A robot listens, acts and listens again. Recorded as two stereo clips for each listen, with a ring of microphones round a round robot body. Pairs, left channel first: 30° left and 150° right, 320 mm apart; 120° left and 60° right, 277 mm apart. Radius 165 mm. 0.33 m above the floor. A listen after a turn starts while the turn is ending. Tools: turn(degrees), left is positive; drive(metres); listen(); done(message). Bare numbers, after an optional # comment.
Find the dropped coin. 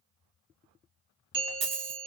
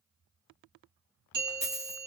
# The dropped coin: 140° right.
turn(-140)
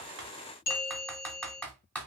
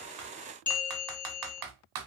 done("Facing where the dropped coin came from. I can't hear it now.")